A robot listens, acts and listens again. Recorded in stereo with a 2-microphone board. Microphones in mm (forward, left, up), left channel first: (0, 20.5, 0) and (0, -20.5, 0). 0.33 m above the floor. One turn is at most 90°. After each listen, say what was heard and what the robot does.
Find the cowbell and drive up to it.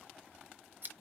Keep listening.
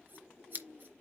Keep listening.
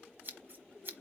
I can't make out a cowbell to turn to.